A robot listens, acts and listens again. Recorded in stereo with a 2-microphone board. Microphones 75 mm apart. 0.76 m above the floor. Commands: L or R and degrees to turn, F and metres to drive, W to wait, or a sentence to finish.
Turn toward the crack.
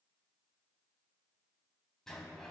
W
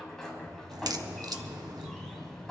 R60
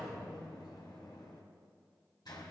W
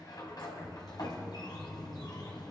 I heard a crack, but can't make it out now. It was about straight ahead or 60° right.